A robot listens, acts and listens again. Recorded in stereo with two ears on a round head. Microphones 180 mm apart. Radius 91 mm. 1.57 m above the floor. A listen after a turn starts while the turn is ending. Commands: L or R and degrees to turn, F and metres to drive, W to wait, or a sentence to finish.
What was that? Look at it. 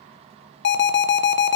L60
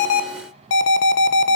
L60
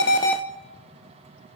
W
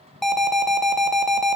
Found it: an alarm, straight ahead.